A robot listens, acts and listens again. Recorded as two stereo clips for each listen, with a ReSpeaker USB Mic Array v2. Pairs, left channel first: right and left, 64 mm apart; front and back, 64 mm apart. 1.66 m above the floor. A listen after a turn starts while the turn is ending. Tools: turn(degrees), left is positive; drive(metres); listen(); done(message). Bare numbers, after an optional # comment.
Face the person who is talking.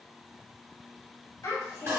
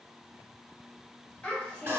# The child speaking: 65° right.
turn(-65)
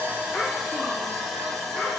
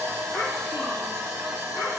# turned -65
listen()
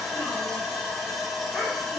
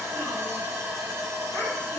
listen()
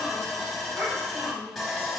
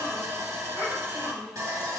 # The child speaking is now 10° left.
turn(10)
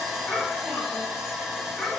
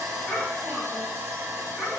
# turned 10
done("Facing the child speaking.")